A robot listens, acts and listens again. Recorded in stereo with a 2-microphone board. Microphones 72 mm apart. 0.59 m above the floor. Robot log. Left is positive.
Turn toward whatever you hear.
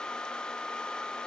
cmd idle
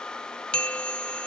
note: The bell: about 15° left or 165° left.
cmd yaw +15
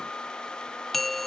end: Found it: a bell, straight ahead.